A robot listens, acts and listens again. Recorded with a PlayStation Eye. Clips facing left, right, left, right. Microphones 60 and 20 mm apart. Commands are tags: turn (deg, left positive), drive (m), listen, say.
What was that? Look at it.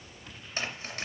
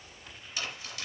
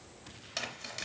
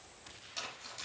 <turn deg="40"/>
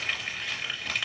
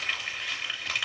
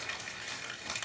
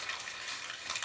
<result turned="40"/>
<say>Found it: crumpling, straight ahead.</say>